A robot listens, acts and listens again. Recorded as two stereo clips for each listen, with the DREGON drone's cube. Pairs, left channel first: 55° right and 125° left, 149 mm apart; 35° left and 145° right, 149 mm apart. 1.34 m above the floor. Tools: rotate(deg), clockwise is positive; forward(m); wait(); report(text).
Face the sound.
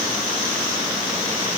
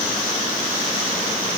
wait()
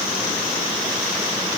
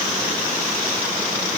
wait()
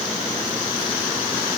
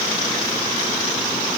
report("I can't make out anything to turn to.")